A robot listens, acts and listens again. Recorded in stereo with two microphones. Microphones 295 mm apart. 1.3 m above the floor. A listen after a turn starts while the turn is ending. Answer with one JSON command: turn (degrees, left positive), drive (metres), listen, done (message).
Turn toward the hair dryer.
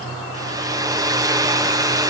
{"turn": -30}
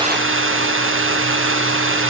{"turn": -135}
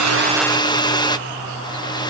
{"turn": 15}
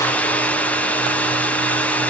{"done": "Facing the hair dryer, 1 to 2 m away."}